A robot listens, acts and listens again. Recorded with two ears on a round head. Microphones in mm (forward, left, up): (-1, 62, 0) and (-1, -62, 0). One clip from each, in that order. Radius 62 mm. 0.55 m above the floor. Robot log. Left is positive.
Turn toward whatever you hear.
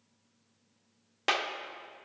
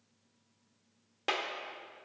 note: The clap: about 30° left or 150° left.
cmd yaw +30
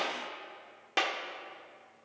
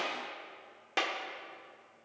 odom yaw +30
end: Found it: a clap, straight ahead.